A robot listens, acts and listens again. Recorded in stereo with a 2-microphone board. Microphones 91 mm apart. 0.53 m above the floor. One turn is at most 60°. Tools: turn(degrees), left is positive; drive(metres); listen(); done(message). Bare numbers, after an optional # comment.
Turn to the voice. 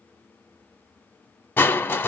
listen()
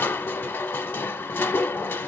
listen()
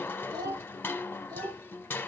# The child speaking: about 50° right or 130° right.
turn(-50)
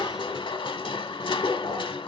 listen()
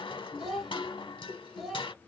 done("Found it: a child speaking, straight ahead, 2 to 4 m away.")